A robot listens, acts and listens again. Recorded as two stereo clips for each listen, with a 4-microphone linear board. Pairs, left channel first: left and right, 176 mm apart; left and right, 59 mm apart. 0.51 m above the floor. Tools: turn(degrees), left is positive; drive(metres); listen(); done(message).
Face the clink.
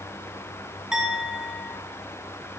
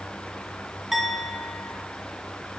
turn(degrees=-30)
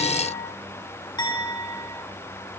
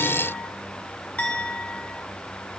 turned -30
turn(degrees=25)
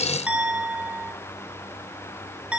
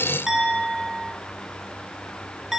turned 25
turn(degrees=-10)
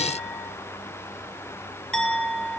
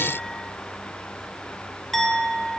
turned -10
done("Facing the clink, under 1 m away.")